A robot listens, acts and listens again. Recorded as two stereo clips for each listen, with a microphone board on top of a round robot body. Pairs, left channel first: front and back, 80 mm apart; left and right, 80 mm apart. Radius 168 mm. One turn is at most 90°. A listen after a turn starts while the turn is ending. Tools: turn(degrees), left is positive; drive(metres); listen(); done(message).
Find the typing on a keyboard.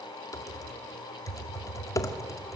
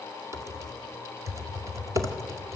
turn(degrees=-40)
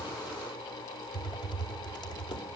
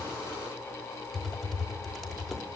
done("Found it: typing on a keyboard, straight ahead, 2 to 4 m away.")